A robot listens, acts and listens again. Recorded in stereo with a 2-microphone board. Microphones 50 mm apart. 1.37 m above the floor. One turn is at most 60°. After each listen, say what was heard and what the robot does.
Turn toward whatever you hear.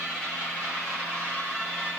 Keep listening.
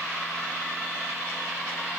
Keep listening.
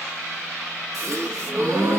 Turn 60° right.
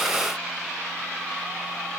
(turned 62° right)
Nothing new. It was at 30° right. Turn 30° right.
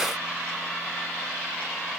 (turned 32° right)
I heard a gasp from this way, but can't make it out now.